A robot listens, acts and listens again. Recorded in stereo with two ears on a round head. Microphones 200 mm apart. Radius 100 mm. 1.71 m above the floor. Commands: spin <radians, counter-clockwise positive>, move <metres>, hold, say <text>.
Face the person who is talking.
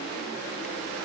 hold
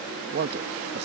spin -0.87
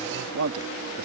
spin -1.13
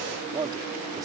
spin -0.35
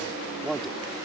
say Facing the man speaking.